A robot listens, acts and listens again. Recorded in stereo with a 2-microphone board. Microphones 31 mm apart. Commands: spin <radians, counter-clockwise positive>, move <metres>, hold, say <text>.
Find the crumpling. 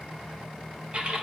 hold
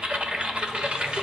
hold
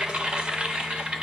say I can't make out crumpling to turn to.